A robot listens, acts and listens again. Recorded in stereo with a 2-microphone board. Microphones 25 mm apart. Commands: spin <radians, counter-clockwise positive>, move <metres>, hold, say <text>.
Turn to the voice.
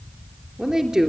spin -0.61
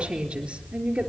spin -2.01
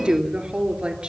spin -0.61
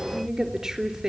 spin -0.26
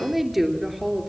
say Facing the woman speaking.